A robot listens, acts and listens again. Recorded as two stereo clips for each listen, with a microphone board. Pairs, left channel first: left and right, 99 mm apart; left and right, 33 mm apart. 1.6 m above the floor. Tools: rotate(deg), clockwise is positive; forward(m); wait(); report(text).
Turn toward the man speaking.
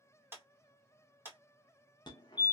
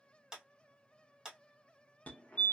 wait()
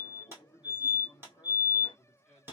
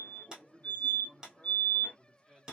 rotate(-30)
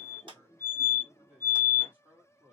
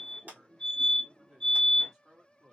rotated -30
rotate(15)
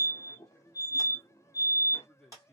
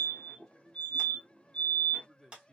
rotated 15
report("Found it: a man speaking, straight ahead, 1 to 2 m away.")